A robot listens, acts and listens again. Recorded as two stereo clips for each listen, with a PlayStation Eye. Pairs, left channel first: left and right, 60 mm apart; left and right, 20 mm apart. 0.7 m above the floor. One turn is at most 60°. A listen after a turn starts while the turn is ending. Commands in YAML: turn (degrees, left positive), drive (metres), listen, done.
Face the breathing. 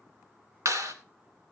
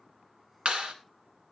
listen: true
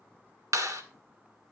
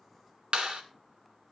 listen: true
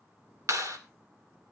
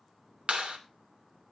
done: "I can't make out breathing to turn to."